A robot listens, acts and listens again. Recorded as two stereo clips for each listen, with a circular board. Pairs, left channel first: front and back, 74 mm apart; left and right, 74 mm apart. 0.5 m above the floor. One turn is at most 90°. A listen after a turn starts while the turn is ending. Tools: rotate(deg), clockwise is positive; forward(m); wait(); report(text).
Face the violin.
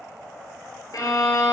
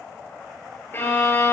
rotate(-30)
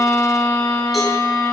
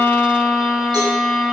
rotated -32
report("Found it: a violin, straight ahead, 2 to 4 m away.")